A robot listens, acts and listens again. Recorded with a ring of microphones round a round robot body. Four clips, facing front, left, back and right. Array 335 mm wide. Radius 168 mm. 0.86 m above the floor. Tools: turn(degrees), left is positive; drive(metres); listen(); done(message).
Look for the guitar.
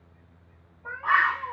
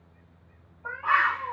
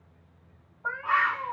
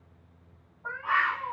listen()
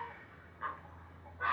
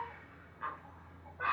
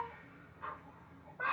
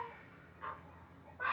listen()
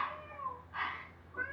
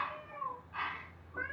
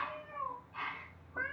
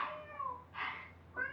done("I can't make out a guitar, only a cat meowing and a bird.")